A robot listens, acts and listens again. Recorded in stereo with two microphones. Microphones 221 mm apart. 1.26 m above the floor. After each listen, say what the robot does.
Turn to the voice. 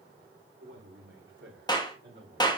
Turn 55° right.
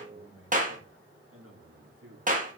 Turn 85° right.
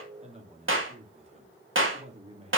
Turn 30° right.
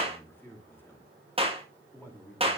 Turn 10° left.
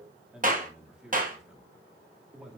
Facing the man speaking.